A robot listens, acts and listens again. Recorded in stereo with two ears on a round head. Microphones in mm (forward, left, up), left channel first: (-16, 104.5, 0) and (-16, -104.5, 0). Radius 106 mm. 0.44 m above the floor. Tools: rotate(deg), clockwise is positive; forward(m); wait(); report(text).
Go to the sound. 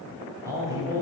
rotate(30)
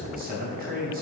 rotate(130)
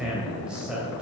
forward(1.0)
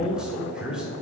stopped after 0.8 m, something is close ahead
report("Arrived at the man speaking, straight ahead.")